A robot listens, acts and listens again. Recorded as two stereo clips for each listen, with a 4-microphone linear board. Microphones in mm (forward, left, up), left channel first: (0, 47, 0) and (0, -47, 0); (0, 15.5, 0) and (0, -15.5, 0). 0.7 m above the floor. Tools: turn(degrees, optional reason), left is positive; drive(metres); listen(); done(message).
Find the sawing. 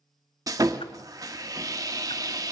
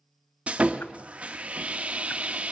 turn(degrees=-35, reason="The sawing: about 35° right or 145° right.")
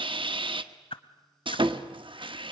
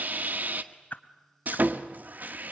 turn(degrees=-100, reason="So it is at 100° right.")
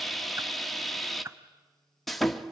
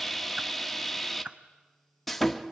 done("Facing the sawing, 1 to 2 m away.")